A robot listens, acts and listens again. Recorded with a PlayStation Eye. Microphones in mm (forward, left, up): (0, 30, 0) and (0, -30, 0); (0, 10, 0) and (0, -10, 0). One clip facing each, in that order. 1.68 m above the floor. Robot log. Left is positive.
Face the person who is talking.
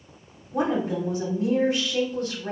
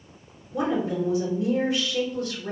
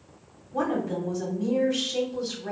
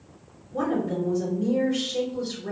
note: The woman speaking: about 55° left or 125° left.
cmd yaw +55
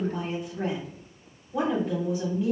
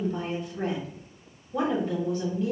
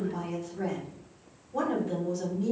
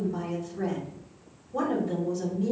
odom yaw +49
note: So it is at 10° left.
cmd yaw +10
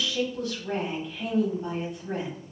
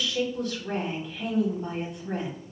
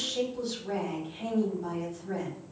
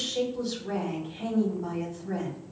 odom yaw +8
end: Facing the woman speaking, 1 to 2 m away.